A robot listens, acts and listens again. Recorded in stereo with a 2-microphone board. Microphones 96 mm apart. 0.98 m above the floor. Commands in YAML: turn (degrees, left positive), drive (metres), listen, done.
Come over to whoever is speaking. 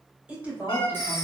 turn: -15
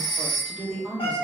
drive: 1.0
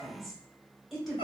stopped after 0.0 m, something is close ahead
done: "Blocked. The woman speaking is further on, straight ahead."